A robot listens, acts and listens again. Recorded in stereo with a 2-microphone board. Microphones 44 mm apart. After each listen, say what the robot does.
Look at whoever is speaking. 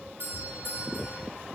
Keep listening.
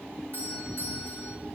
Keep listening.
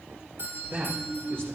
Turn 60° right.
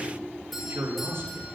Turn 65° right.
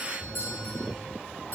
Keep listening.
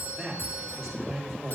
Facing the man speaking, over 4 m away.